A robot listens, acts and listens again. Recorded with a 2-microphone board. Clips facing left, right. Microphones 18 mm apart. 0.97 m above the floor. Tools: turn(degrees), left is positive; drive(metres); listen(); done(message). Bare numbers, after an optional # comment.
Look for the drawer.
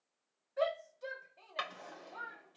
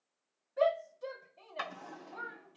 # The drawer: about 65° left or 115° left.
turn(65)
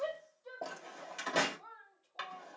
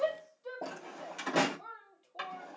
done("Facing the drawer.")